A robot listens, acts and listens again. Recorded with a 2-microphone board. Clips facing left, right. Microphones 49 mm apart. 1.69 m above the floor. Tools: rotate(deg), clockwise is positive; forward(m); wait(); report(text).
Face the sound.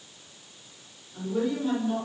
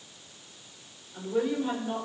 rotate(20)
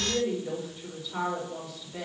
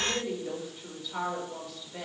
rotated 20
report("Facing the woman speaking, over 4 m away.")